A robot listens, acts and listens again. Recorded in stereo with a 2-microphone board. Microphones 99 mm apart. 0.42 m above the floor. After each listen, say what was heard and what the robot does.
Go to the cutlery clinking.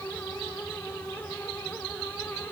Keep listening.
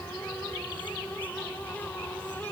Keep listening.
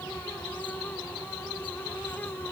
I can't make out cutlery clinking to turn to.